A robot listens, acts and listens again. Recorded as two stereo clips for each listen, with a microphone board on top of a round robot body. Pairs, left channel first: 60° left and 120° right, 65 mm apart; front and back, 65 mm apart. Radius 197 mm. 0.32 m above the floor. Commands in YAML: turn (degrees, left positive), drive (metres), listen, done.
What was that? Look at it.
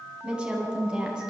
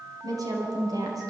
turn: 165
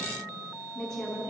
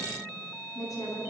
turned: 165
turn: -20
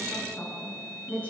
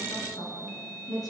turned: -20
done: "Facing the woman speaking."